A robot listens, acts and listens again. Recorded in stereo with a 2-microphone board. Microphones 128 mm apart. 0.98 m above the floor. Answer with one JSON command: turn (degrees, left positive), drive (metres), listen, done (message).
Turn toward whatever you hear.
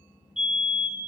{"turn": -30}
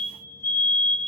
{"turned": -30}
{"turn": 20}
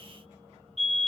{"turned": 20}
{"done": "Facing the fire alarm."}